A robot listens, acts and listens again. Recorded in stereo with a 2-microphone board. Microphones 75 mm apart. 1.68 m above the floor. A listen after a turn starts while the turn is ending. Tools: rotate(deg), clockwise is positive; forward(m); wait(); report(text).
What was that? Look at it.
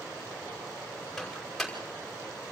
rotate(-30)
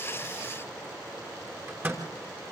rotate(30)
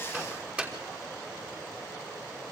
rotate(15)
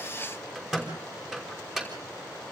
report("Facing the microwave.")